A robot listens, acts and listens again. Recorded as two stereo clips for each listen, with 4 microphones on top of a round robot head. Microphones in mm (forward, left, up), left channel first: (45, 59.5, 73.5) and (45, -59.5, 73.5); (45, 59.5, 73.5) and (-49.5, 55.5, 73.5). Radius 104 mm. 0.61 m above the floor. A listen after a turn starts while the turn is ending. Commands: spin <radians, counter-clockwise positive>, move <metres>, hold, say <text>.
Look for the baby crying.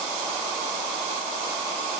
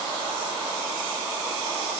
hold
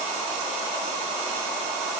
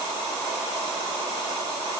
hold
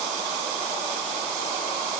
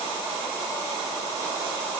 say I can't make out a baby crying.